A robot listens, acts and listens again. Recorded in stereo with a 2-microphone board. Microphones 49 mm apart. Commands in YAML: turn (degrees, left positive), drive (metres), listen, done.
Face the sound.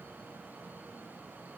listen: true
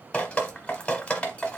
turn: 20
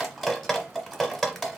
done: "Found it: dripping, straight ahead, under 1 m away."